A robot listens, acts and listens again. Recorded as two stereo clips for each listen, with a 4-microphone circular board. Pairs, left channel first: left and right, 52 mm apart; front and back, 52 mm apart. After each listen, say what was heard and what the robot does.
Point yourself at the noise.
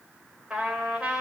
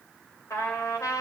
The trumpet: 20° right. Turn 20° right.
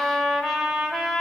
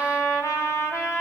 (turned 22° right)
Found it: a trumpet, straight ahead.